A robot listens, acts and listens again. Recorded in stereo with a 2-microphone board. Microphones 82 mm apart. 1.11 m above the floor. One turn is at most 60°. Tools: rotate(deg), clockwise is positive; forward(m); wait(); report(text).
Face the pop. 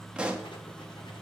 rotate(30)
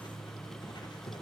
wait()
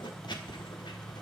report("I heard a pop, but can't make it out now. It was about 20° left or 140° right.")